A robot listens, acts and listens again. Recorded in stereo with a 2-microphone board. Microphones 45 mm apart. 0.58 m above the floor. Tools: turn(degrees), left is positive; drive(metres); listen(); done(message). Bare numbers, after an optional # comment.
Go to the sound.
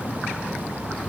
listen()
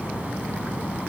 listen()
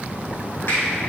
# The finger snap: about 65° left or 115° left.
turn(65)
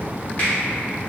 # So it is at 35° left.
turn(35)
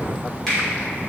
# The finger snap is now 10° left.
turn(10)
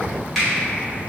drive(1.0)
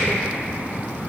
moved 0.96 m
listen()
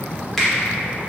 drive(1.0)
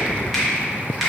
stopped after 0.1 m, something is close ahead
done("I am next to the finger snap.")